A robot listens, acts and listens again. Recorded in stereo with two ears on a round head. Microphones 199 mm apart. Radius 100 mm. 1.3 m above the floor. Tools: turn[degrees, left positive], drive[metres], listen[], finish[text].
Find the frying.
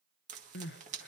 Thought: The frying: about 35° right or 145° right.
Action: turn[-35]
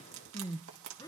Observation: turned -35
Thought: So it is at 110° right.
Action: turn[-110]
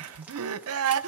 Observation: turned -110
Action: listen[]
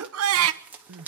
Action: finish[Found it: frying, straight ahead.]